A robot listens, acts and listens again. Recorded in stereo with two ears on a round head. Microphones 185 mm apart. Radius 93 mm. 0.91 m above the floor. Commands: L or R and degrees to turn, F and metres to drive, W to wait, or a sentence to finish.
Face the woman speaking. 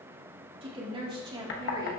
R25
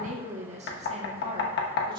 R25
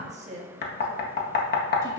R15
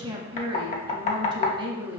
R25
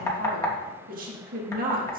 R135
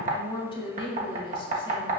L25
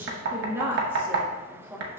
R10
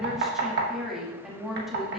Found it: a woman speaking, straight ahead, 1 to 2 m away.